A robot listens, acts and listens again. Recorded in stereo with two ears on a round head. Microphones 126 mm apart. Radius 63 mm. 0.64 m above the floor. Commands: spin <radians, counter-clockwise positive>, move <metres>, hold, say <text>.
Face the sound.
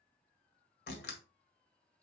spin 1.57
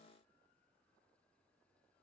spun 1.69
say Facing where the door slam came from. I can't hear it now.